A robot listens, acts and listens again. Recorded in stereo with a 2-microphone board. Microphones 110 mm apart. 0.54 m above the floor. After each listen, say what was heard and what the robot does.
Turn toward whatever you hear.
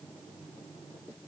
Keep listening.
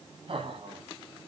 The laughter: about 55° right or 125° right. Turn 55° right.
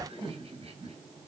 So it is at 70° right. Turn 70° right.
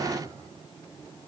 The laughter is now 35° right. Turn 35° right.
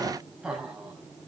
The laughter is now 10° right. Turn 10° right.
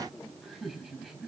Found it: laughter, straight ahead, over 4 m away.